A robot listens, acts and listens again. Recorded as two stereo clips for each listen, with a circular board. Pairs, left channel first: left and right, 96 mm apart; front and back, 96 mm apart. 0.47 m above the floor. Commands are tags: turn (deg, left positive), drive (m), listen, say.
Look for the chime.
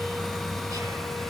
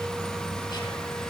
<listen/>
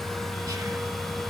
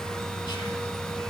<listen/>
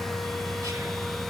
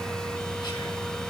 <say>I can't make out a chime to turn to.</say>